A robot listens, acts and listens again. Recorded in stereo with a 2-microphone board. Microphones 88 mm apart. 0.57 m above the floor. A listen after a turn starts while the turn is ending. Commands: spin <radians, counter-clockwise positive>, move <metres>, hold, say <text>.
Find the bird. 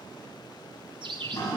spin -1.13
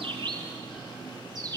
spin -0.79
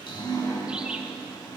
hold
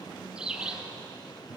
spin -0.17
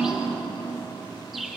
say Facing the bird, 1 to 2 m away.